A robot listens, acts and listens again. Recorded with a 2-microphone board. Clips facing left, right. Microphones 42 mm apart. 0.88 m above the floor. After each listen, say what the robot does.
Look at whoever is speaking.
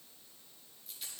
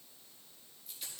Keep listening.
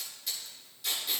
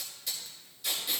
Keep listening.
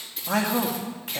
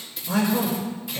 Turn 60° left.
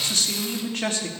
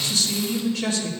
Turn 55° left.
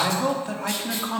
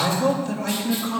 Turn 25° left.
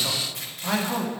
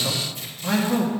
Turn 10° left.
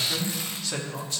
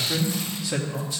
Facing the man speaking, 1 to 2 m away.